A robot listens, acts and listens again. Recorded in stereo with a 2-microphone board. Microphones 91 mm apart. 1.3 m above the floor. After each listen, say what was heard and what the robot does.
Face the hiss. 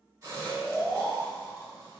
The hiss: about 40° right or 140° right. Turn 40° right.
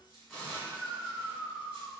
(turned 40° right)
Facing the hiss, 1 to 2 m away.